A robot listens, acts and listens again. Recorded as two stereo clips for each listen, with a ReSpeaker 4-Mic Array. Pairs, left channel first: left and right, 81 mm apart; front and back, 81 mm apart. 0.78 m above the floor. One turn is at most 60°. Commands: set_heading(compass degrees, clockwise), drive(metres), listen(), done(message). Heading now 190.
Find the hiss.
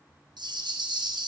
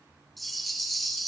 listen()
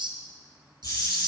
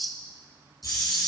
set_heading(140)
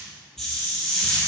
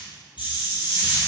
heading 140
done("Found it: a hiss, straight ahead.")